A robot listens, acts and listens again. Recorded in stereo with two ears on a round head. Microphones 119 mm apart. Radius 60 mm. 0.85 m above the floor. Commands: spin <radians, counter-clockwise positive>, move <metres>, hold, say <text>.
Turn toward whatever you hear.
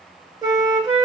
spin -0.61
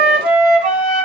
spin -1.92
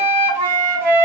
spin -0.52
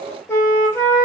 spin 0.26
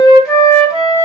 say Found it: a flute, straight ahead, 1 to 2 m away.